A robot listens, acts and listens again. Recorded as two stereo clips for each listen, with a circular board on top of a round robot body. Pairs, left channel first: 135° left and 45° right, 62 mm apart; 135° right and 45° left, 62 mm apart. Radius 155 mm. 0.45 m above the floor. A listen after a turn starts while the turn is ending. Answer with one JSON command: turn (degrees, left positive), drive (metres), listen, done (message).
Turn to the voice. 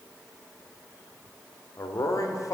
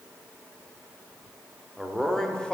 {"turn": 150}
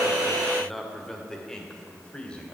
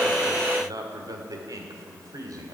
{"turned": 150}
{"turn": 65}
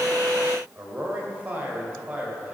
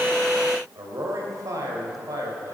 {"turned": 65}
{"turn": 25}
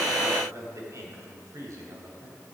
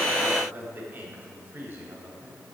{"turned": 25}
{"turn": -10}
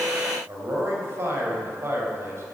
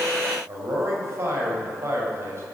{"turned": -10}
{"done": "Facing the man speaking."}